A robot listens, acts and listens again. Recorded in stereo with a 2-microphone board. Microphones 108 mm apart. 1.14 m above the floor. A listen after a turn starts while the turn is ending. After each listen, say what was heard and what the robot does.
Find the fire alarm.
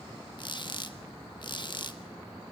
Keep listening.
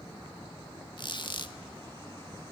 Keep listening.
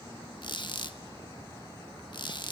I can't make out a fire alarm, only a squeak.